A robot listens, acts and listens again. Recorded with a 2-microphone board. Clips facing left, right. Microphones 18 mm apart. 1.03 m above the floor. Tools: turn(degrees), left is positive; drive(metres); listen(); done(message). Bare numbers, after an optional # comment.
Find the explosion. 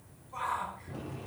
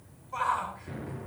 # The explosion: about 65° right or 115° right.
turn(-65)
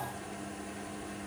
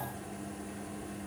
listen()
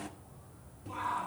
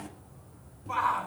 done("I heard an explosion, but can't make it out now. It was about straight ahead or 50° right.")